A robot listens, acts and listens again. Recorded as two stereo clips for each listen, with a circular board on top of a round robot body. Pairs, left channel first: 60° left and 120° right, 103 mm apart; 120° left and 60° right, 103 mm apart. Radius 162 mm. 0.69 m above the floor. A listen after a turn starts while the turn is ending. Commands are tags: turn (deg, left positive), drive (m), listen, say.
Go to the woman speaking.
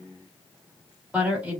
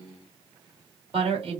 <turn deg="-40"/>
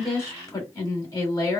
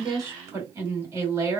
<drive m="1.0"/>
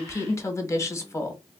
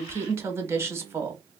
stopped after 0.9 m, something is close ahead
<say>Arrived at the woman speaking, straight ahead.</say>